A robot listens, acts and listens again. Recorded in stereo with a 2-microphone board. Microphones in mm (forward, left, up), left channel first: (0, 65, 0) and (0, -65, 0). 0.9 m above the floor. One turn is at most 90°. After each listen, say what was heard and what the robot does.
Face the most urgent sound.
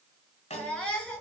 Turn 30° left.
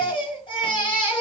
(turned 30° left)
So it is at 140° left. Turn 90° left.
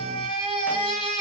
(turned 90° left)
The baby crying is now 40° left. Turn 40° left.
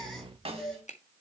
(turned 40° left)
Facing the baby crying, over 4 m away.